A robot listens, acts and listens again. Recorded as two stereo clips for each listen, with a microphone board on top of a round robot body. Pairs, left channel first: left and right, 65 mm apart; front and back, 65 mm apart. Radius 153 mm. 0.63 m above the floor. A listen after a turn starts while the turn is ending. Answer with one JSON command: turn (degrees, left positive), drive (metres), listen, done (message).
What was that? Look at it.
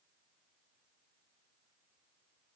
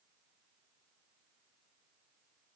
{"listen": true}
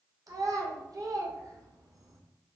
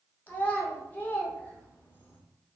{"turn": -60}
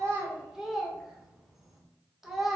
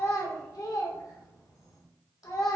{"done": "Facing the child speaking, 1 to 2 m away."}